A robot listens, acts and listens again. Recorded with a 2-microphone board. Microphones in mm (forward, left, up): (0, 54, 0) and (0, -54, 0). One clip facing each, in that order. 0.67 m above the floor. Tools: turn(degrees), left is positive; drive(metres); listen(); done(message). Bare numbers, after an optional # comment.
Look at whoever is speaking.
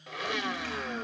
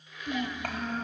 # The child speaking: about 55° right or 125° right.
turn(-55)
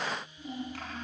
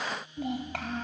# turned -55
# So it is at 70° right.
turn(-70)
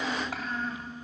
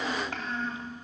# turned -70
done("Found it: a child speaking, straight ahead.")